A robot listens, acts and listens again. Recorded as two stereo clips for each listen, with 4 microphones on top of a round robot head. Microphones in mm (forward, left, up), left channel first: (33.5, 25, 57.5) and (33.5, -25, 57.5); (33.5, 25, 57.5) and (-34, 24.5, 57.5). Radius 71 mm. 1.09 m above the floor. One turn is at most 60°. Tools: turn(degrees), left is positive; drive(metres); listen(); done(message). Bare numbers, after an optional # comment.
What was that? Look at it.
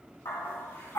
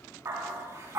# The dog barking: 135° left.
turn(60)
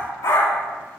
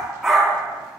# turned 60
# The dog barking is now 100° left.
turn(60)
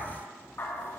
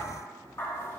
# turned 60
# The dog barking is now 50° left.
turn(50)
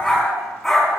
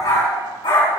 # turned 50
done("Facing the dog barking, 2 to 4 m away.")